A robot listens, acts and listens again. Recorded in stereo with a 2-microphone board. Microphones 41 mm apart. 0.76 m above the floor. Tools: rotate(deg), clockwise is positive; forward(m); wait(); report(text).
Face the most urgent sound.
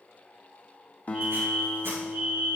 rotate(45)
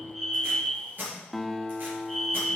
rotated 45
report("Found it: a fire alarm, straight ahead.")